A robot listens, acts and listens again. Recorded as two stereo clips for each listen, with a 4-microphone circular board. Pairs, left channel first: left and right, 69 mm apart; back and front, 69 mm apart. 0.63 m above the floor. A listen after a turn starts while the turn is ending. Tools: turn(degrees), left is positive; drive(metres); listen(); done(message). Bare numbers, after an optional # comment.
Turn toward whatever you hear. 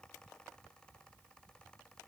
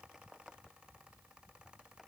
listen()
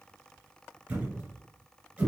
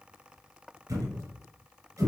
# The thud: 20° right.
turn(-20)
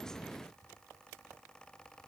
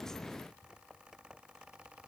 done("Facing where the thud came from. I can't hear it now.")